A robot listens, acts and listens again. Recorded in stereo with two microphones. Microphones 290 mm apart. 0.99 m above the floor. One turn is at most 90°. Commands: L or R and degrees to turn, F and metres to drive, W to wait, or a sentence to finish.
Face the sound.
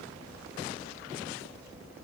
W
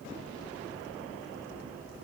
W
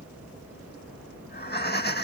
L35
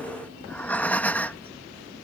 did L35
Facing the breathing.